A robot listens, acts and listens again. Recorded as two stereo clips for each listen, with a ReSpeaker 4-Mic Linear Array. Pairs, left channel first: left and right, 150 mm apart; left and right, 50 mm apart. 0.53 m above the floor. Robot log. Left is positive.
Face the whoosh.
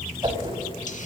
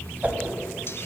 note: The whoosh: about 30° right or 150° right.
cmd yaw -30
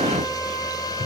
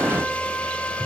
cmd idle
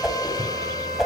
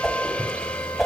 end: Facing the whoosh.